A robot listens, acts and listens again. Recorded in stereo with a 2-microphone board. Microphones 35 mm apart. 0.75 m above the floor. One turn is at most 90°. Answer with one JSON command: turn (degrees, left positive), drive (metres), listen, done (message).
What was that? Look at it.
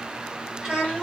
{"turn": -30}
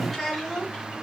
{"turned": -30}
{"done": "Found it: a child speaking, straight ahead."}